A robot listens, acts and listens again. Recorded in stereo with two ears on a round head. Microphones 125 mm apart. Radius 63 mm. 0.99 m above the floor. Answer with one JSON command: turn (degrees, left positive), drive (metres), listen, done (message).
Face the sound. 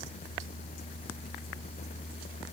{"listen": true}
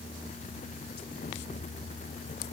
{"listen": true}
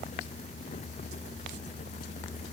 {"done": "I can't make out anything to turn to."}